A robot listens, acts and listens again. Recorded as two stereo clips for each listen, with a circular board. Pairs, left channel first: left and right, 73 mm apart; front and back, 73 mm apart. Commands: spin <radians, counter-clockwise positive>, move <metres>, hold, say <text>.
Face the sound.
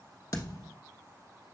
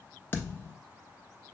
spin 1.05
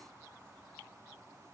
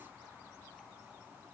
say Facing where the thud came from. I can't hear it now.